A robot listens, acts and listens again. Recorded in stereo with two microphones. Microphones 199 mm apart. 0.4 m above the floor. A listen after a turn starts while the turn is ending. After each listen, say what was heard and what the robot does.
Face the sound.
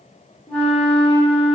Turn 30° left.
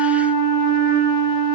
So it is at 25° right. Turn 25° right.
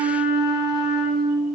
Facing the flute.